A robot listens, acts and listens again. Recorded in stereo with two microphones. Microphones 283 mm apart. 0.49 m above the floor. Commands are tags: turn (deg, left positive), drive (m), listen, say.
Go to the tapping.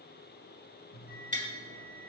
<turn deg="-25"/>
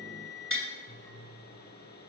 <turn deg="-130"/>
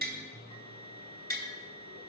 <turn deg="-35"/>
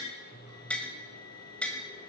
<drive m="1.0"/>
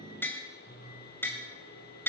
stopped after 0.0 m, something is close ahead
<turn deg="10"/>
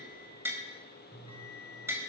<turn deg="-10"/>
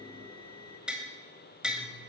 <say>Something is in my way. I am facing the tapping but have not reached it.</say>